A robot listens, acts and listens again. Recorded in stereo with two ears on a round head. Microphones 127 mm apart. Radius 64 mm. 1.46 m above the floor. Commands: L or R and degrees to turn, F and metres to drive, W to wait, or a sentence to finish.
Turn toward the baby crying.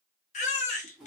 L50
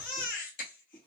L70
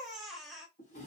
Found it: a baby crying, straight ahead, under 1 m away.